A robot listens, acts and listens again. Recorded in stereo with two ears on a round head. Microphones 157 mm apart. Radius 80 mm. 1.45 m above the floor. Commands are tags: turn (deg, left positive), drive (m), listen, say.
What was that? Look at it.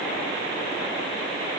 <listen/>
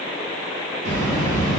<turn deg="-45"/>
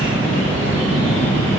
<turn deg="-90"/>
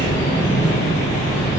<turn deg="20"/>
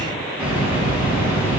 <turn deg="-10"/>
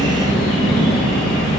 <say>Facing the bird.</say>